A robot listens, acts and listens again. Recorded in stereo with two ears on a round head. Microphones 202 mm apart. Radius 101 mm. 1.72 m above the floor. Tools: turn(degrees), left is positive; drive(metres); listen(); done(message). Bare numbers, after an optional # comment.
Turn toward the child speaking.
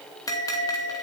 listen()
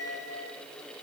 listen()
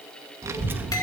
turn(-30)
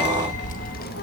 # So it is at 45° left.
turn(45)
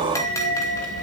# The child speaking is now 40° left.
turn(40)
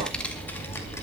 # The child speaking is now 15° left.
turn(15)
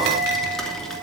done("Found it: a child speaking, straight ahead, 2 to 4 m away.")